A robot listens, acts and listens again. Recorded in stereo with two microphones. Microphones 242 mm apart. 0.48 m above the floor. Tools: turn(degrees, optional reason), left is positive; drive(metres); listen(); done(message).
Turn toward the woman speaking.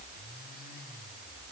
listen()
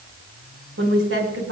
turn(degrees=-65, reason="The woman speaking: about 65° right or 115° right.")
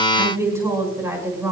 turn(degrees=-10, reason="So it is at 10° right.")
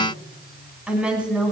done("Facing the woman speaking.")